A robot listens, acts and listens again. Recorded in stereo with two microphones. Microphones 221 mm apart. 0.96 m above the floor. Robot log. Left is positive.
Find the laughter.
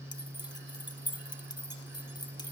cmd idle
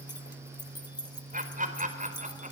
note: The laughter: about 35° right or 145° right.
cmd yaw -35
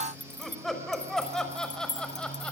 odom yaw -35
end: Found it: laughter, straight ahead, over 4 m away.